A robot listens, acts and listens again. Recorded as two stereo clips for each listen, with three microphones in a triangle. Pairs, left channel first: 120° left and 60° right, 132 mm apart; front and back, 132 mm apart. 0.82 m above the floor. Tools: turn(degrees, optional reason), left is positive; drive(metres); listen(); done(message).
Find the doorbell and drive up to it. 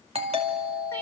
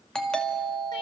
turn(degrees=-85, reason="The doorbell: 85° right.")
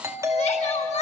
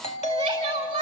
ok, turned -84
drive(metres=1.0)
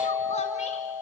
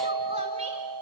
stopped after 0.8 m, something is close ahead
done("Arrived at the doorbell, straight ahead.")